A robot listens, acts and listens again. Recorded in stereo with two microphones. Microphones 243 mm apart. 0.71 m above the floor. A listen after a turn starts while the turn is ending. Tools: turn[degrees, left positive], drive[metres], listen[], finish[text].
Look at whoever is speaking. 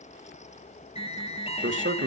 Thought: The man speaking: about 55° right or 125° right.
Action: turn[-55]
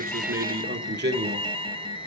Thought: So it is at 40° right.
Action: turn[-40]
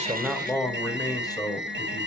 Thought: The man speaking is now 20° left.
Action: turn[20]
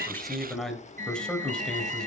Action: finish[Found it: a man speaking, straight ahead.]